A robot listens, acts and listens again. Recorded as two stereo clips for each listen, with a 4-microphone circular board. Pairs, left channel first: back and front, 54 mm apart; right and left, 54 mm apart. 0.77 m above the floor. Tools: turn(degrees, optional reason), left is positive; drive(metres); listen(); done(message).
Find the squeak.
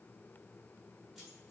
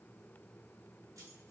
listen()
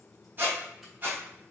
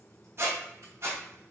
turn(degrees=50, reason="The squeak: 50° left.")
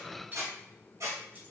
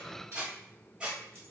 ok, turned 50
turn(degrees=20, reason="The squeak is now 20° left.")
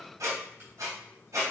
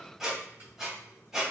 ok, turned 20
done("Facing the squeak.")